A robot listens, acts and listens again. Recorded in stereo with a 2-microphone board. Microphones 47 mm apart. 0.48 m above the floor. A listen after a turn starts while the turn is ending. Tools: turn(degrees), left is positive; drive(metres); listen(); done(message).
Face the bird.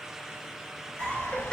turn(degrees=55)
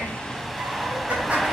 done("Found it: a bird, straight ahead, under 1 m away.")